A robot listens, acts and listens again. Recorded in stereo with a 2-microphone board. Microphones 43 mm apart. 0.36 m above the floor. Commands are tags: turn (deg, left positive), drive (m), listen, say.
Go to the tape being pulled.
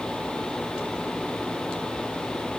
<listen/>
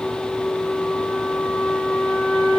<listen/>
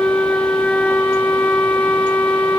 <say>I can't make out tape being pulled, only a flute.</say>